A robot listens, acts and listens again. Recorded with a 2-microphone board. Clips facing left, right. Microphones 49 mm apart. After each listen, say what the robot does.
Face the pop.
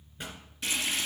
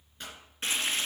Turn 30° left.
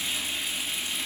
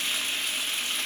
Keep listening.
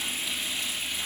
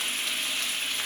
I heard a pop, but can't make it out now. It was about 20° right or 140° left.